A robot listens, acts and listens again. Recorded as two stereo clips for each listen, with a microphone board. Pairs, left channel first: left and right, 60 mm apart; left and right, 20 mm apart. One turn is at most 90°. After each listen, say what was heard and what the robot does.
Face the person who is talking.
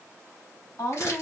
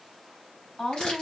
The woman speaking: about 60° left or 120° left. Turn 60° left.
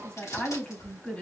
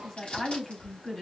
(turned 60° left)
So it is at 25° left. Turn 25° left.
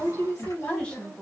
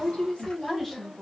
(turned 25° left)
The woman speaking is now 30° left. Turn 30° left.
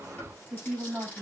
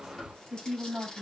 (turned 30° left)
The woman speaking is now 10° right. Turn 10° right.
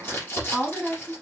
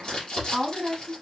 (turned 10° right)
Found it: a woman speaking, straight ahead.